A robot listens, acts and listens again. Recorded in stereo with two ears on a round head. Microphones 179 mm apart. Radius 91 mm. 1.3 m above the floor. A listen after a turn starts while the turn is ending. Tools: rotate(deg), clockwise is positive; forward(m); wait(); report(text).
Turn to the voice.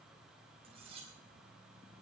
wait()
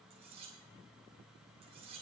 wait()
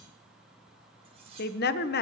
rotate(-55)
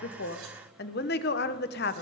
rotate(-60)
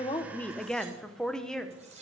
report("Found it: a woman speaking, straight ahead.")